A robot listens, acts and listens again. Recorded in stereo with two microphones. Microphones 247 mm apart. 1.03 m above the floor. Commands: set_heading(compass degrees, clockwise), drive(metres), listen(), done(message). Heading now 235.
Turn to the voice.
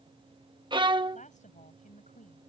set_heading(205)
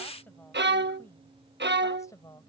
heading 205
set_heading(190)
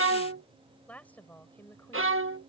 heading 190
set_heading(180)
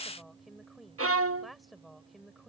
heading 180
done("Found it: a woman speaking, straight ahead.")